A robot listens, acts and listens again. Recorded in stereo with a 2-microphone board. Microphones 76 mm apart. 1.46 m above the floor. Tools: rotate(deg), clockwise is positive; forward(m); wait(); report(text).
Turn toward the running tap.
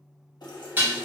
rotate(-65)
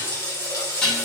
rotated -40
rotate(-50)
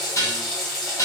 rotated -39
rotate(-10)
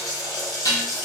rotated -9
report("Facing the running tap, 1 to 2 m away.")